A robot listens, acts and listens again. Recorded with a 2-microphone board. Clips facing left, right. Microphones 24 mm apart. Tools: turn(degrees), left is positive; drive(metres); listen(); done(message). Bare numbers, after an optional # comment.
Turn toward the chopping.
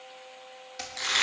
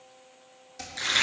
# The chopping: about 30° left or 150° left.
turn(30)
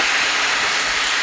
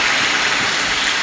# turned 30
listen()
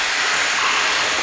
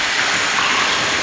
listen()
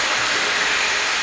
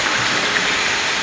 done("I heard chopping, but can't make it out now. It was about straight ahead or 120° left.")